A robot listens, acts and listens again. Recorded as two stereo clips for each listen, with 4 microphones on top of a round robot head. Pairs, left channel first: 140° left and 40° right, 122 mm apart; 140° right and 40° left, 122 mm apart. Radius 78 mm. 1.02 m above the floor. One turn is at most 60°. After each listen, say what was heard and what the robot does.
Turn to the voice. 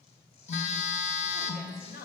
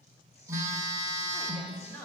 The woman speaking: 140° left. Turn 60° left.
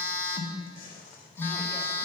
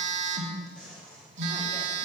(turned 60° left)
Nothing new. It was at 80° left. Turn 60° left.
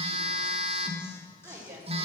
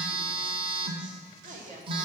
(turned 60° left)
The woman speaking is now 25° left. Turn 25° left.
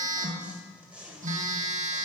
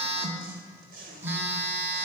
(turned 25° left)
Keep listening.
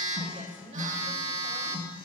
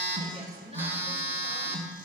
Facing the woman speaking.